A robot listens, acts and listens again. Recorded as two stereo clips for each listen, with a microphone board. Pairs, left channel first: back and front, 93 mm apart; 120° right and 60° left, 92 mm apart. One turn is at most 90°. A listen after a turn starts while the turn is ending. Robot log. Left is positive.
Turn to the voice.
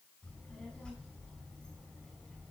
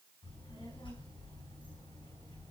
note: The child speaking: 100° right.
cmd yaw -90
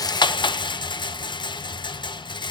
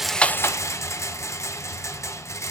note: Nothing new. It was at 10° right.
cmd yaw -10
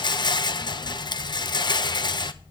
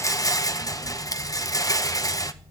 note: The child speaking is now 15° left.
cmd yaw +15
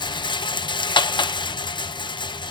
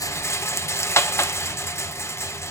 cmd idle
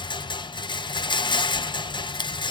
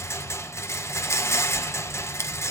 cmd idle
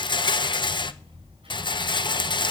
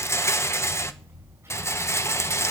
end: Found it: a child speaking, straight ahead, over 4 m away.